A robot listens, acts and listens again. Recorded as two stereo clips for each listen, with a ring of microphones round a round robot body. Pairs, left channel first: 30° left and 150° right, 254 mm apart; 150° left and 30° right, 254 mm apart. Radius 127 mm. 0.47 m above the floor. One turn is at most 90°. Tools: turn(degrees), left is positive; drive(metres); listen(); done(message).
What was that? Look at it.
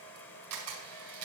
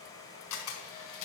turn(degrees=-90)
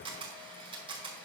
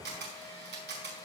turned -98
turn(degrees=-80)
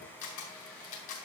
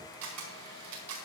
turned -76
done("Facing the camera shutter.")